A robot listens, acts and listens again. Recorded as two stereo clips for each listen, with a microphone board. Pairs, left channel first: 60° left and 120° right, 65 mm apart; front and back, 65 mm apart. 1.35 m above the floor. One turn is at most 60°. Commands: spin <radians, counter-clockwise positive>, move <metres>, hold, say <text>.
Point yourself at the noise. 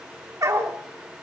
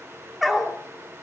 spin -1.05
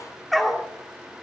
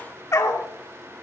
spin -0.52
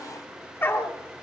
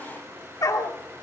spin 0.17
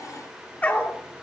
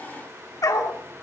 say Facing the dog barking, 1 to 2 m away.